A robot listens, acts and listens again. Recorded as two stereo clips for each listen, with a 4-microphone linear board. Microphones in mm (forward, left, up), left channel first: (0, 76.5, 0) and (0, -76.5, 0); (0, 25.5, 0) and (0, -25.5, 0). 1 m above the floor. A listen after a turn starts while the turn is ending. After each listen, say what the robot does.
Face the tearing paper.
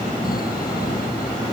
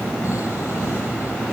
Keep listening.
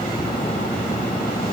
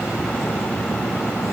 Keep listening.
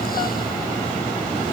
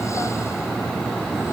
I can't make out tearing paper to turn to.